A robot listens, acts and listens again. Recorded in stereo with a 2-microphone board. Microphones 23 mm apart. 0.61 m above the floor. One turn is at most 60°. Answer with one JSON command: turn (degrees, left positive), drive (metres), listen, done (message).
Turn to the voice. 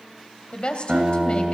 {"turn": 50}
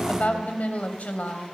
{"turn": 60}
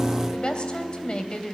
{"turn": 35}
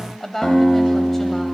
{"turn": 10}
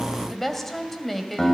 {"done": "Facing the woman speaking."}